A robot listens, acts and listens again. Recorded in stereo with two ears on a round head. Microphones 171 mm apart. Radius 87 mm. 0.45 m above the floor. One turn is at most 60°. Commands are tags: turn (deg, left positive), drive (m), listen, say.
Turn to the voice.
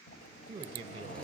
<turn deg="-25"/>
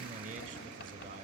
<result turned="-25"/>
<turn deg="-60"/>
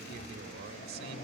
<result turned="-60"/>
<turn deg="-60"/>
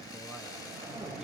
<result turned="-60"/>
<listen/>
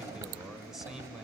<say>Found it: a man speaking, straight ahead.</say>